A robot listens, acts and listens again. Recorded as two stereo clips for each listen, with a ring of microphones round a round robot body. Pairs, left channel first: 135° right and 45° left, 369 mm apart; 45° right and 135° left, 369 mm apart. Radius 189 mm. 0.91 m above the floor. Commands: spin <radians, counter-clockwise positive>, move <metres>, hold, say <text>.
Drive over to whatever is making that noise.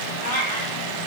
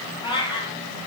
spin -2.18
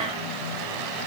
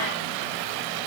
hold
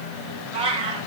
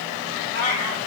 spin -0.52
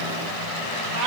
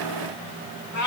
move 1.0
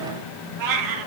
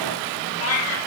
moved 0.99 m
spin 0.17
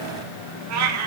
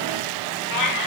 move 1.0
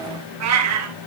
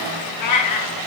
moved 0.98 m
move 1.0
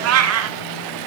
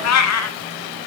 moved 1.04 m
move 1.0
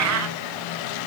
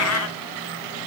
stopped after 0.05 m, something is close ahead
say I am next to the cat meowing.